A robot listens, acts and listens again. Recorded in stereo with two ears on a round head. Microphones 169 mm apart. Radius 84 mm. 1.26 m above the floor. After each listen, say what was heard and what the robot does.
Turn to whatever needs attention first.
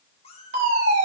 The fire alarm: about 40° right or 140° right. Turn 40° right.
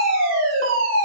So it is at 100° right. Turn 100° right.
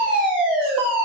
Found it: a fire alarm, straight ahead, over 4 m away.